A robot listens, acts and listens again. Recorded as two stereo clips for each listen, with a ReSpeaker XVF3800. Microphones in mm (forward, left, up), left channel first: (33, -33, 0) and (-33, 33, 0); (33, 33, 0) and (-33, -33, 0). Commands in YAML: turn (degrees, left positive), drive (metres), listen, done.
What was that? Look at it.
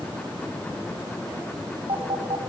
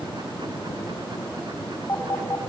turn: 105
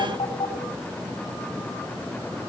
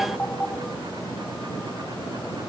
turn: -30
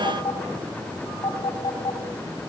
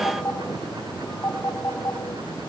turn: -15
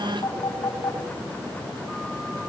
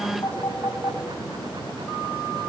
done: "Facing the phone ringing."